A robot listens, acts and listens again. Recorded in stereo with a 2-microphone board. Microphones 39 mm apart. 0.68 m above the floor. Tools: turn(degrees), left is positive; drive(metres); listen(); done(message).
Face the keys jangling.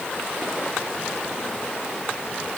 listen()
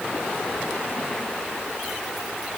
listen()
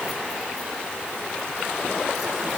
done("I can't make out keys jangling.")